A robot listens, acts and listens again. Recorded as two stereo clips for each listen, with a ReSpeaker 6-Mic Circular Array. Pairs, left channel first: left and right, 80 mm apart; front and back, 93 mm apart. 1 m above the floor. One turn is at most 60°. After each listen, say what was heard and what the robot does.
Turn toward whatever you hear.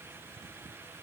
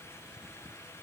Keep listening.
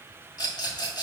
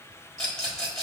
The rattle: 80° left. Turn 60° left.
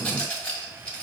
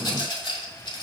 The rattle is now 15° left. Turn 15° left.
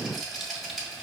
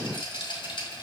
Facing the rattle.